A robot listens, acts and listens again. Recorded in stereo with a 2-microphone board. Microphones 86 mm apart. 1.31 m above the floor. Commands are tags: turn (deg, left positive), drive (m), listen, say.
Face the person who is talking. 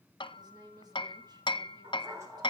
<turn deg="-50"/>
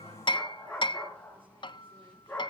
<listen/>
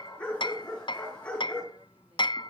<listen/>
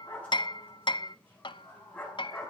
<say>I heard a woman speaking, but can't make it out now. It was about straight ahead or 80° right.</say>